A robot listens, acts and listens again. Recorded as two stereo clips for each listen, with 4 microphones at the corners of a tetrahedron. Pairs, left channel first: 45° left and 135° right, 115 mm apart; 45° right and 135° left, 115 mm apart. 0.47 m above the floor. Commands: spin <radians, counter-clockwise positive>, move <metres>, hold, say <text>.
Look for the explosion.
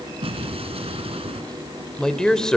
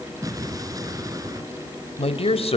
spin -2.88
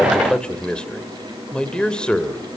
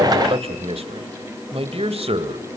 say Facing where the explosion came from. I can't hear it now.